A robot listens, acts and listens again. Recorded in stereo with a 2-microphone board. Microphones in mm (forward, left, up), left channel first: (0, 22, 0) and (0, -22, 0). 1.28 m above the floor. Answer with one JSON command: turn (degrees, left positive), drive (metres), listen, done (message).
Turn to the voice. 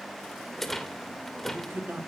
{"turn": -55}
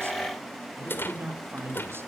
{"turn": -70}
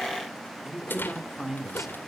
{"done": "Found it: a man speaking, straight ahead, 2 to 4 m away."}